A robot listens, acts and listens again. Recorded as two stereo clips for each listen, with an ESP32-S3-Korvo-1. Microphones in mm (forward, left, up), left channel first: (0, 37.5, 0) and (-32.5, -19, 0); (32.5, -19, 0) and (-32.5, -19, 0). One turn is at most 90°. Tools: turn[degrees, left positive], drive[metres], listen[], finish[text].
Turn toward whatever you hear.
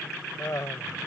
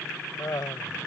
Thought: The laughter: 25° left.
Action: turn[25]
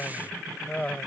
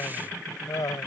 Thought: The laughter is now 10° right.
Action: turn[-10]
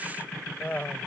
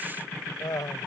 Action: finish[Facing the laughter.]